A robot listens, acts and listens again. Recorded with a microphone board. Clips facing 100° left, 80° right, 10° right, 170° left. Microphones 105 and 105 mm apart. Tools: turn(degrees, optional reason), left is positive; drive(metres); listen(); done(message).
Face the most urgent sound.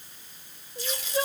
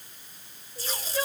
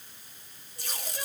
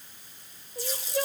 turn(degrees=165, reason="The crying: 165° left.")
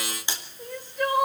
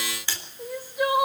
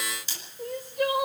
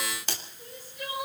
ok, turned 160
done("Facing the crying.")